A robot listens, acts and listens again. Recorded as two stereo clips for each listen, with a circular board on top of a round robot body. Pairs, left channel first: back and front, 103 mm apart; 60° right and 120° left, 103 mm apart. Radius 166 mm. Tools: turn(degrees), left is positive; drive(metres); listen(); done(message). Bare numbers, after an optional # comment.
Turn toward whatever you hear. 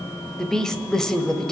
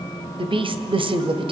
# The woman speaking: 95° left.
turn(95)
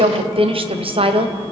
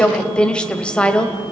# The woman speaking is now 20° left.
turn(20)
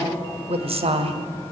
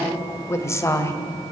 done("Found it: a woman speaking, straight ahead, 2 to 4 m away.")